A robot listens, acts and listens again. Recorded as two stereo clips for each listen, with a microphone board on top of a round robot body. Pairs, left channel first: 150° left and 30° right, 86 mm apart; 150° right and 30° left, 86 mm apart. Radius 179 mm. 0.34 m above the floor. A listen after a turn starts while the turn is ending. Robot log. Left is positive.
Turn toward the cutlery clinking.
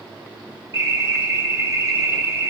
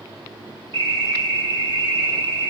cmd idle
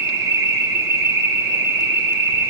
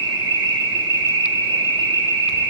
cmd idle
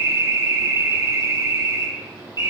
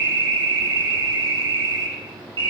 end: I can't make out cutlery clinking to turn to.